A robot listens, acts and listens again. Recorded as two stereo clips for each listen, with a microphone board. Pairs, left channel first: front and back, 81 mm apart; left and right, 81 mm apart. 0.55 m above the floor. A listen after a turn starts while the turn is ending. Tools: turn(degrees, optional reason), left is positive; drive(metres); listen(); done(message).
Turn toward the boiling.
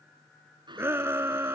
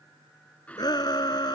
turn(degrees=165, reason="The boiling: 165° left.")
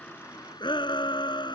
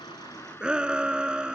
turn(degrees=30, reason="The boiling is now 30° left.")
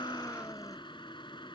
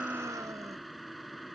done("Facing the boiling.")